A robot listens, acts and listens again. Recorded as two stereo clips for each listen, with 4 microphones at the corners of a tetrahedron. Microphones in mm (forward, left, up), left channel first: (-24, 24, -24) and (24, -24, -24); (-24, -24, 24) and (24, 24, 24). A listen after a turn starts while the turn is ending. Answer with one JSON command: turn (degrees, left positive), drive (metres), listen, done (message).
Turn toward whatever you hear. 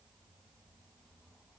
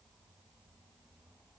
{"listen": true}
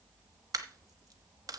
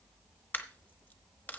{"turn": -70}
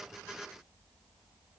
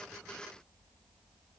{"done": "I heard a dropped coin from this way, but can't make it out now."}